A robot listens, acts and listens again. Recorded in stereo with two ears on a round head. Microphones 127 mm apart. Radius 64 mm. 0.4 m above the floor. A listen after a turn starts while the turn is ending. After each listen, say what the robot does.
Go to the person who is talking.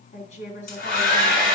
Turn 55° left.
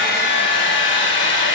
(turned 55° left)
Keep listening.
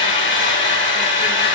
Keep listening.
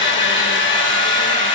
I heard a woman speaking, but can't make it out now. It was about straight ahead or 70° left. I did not reach it.